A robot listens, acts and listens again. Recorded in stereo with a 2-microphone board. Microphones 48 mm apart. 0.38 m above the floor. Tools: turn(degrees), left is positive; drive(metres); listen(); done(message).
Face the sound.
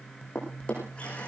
turn(degrees=20)
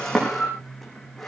done("Found it: a drawer, straight ahead.")